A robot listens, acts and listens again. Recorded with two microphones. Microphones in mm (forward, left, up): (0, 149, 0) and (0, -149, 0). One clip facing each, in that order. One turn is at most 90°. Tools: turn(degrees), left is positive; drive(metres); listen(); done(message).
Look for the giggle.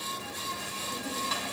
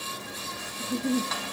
turn(degrees=-65)
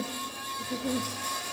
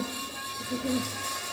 done("Facing the giggle.")